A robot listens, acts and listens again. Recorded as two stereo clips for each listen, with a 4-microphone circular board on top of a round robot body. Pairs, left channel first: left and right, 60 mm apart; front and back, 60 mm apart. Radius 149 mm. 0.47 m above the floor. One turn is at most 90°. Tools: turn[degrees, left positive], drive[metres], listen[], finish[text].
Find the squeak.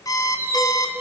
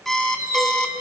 Thought: The squeak: 135° right.
Action: turn[-90]
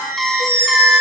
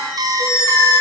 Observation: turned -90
Thought: The squeak is now 45° right.
Action: turn[-45]
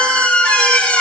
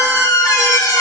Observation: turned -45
Thought: The squeak is now 20° left.
Action: turn[20]
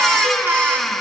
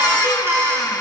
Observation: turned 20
Action: finish[Found it: a squeak, straight ahead, over 4 m away.]